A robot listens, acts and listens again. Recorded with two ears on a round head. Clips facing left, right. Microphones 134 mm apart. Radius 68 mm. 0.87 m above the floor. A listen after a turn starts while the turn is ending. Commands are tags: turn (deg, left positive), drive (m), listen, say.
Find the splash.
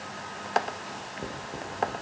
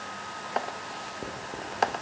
<listen/>
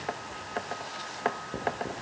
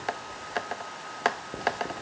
<listen/>
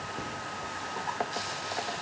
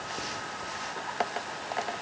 <say>I can't make out a splash, only writing.</say>